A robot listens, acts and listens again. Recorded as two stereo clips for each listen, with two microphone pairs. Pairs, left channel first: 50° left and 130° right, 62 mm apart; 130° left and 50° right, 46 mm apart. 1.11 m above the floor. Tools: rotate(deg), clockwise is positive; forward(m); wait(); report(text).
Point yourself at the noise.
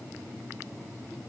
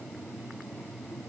wait()
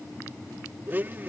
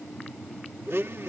rotate(75)
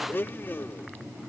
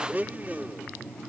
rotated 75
report("Found it: a blender, straight ahead.")